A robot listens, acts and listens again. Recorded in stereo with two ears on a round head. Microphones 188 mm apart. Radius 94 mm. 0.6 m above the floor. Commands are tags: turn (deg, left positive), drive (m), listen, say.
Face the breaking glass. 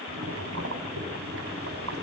<listen/>
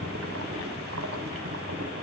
<listen/>
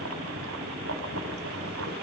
<say>I can't make out breaking glass, only boiling.</say>